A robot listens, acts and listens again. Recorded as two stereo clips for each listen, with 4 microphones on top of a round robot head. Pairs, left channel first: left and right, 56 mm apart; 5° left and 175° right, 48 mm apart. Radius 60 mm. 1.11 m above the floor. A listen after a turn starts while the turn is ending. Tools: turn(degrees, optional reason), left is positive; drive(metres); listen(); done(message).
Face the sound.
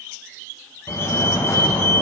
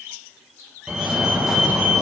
turn(degrees=105, reason="The fire alarm: 105° left.")
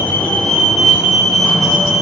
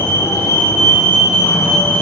done("Facing the fire alarm.")